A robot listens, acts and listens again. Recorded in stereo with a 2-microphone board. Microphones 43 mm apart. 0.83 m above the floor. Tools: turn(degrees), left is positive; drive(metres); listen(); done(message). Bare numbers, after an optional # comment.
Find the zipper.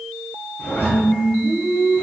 # The zipper: about 65° left or 115° left.
turn(65)
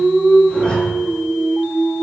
# So it is at 25° left.
turn(25)
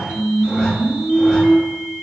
listen()
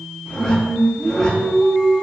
listen()
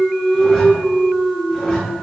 done("Facing where the zipper came from. I can't hear it now.")